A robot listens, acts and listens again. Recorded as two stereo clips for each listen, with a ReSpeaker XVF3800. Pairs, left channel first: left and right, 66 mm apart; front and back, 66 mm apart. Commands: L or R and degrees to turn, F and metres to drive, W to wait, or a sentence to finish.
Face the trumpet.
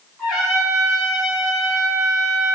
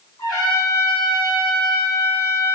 Found it: a trumpet, straight ahead, 2 to 4 m away.